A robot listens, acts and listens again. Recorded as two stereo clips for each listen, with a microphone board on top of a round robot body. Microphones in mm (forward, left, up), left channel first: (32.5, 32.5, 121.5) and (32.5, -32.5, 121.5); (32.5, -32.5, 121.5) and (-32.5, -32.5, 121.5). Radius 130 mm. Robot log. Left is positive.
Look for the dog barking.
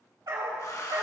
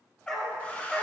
note: The dog barking: 70° right.
cmd yaw -70
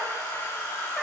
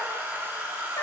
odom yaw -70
cmd idle
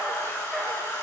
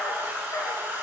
note: The dog barking is now 10° left.
cmd yaw +10
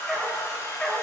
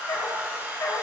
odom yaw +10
note: The dog barking is now 10° left.
cmd yaw +10
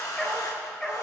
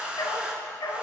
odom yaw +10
note: The dog barking is now 15° left.
cmd yaw +15
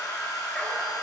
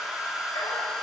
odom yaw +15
cmd idle
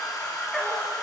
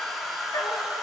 cmd idle
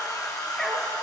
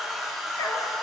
end: Found it: a dog barking, straight ahead, 1 to 2 m away.